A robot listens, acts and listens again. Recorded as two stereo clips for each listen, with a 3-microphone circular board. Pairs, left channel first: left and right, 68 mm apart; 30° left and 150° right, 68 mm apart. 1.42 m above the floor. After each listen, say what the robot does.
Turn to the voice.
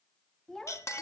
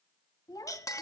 Found it: a child speaking, straight ahead.